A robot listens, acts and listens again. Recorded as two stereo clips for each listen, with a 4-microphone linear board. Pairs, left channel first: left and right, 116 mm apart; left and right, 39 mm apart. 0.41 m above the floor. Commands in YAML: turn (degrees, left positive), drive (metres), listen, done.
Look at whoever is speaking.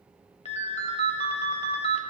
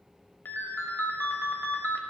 listen: true
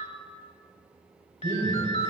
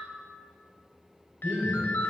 turn: -35
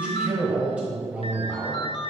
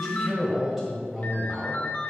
turn: -10
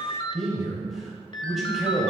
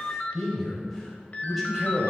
done: "Facing the man speaking."